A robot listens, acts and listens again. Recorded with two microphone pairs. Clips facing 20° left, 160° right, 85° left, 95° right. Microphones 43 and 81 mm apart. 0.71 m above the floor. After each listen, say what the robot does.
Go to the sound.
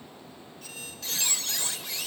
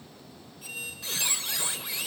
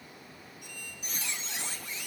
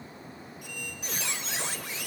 Turn 85° right.
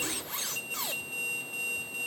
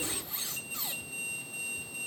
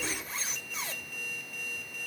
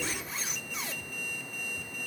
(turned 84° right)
Drive 1.0 m forward.
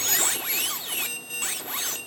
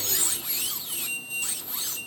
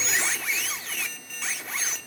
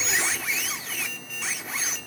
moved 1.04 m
Drive 1.0 m forward.
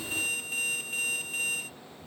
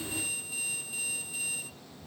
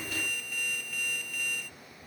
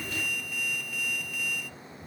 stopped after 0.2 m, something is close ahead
I am next to the squeak.